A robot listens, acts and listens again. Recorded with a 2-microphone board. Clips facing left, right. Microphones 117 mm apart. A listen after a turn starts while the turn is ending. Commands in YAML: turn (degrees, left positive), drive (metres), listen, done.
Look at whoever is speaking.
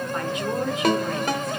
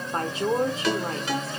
turn: -30
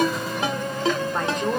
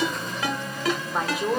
done: "Facing the woman speaking, 1 to 2 m away."